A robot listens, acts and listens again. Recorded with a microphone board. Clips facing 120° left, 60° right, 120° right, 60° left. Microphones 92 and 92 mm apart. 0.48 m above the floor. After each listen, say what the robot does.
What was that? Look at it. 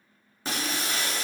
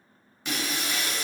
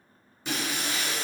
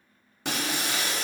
Turn 70° left.
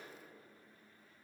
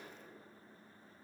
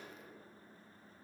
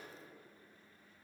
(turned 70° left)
I heard breaking glass from this way, but can't make it out now.